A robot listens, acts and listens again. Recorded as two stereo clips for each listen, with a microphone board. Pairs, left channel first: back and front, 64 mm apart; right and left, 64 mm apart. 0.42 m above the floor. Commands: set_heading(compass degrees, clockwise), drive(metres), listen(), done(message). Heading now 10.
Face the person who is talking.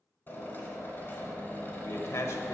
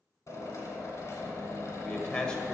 set_heading(175)
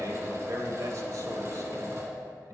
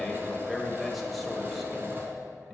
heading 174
done("Found it: a man speaking, straight ahead.")